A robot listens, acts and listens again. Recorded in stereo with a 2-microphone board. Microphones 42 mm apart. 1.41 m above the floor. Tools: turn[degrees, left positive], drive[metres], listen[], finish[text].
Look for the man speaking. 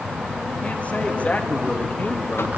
Thought: The man speaking: about 45° left or 135° left.
Action: turn[45]
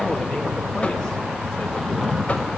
Thought: So it is at 10° left.
Action: turn[10]
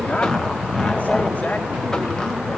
Thought: The man speaking is now 35° left.
Action: turn[35]
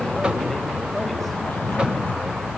Action: listen[]
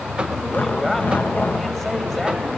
Action: finish[Found it: a man speaking, straight ahead.]